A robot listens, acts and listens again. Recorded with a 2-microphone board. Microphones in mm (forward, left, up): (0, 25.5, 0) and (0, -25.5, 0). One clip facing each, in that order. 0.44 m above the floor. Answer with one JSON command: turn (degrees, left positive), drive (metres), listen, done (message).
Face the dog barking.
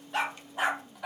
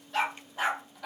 {"turn": 30}
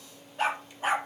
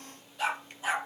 {"turn": 140}
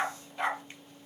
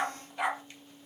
{"turn": -10}
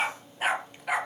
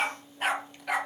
{"turn": 10}
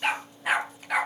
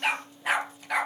{"done": "Facing the dog barking."}